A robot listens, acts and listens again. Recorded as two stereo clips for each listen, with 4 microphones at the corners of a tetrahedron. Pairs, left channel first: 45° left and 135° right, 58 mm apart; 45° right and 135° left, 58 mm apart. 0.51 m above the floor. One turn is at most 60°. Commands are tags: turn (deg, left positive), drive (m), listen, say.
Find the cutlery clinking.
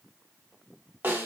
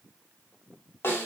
<listen/>
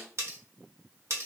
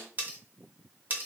<turn deg="-60"/>
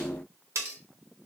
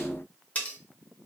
<turn deg="-60"/>
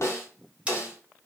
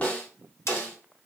<turn deg="-45"/>
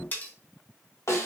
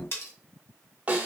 <turn deg="-10"/>
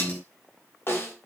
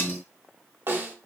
<listen/>
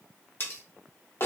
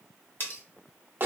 <say>Found it: cutlery clinking, straight ahead, under 1 m away.</say>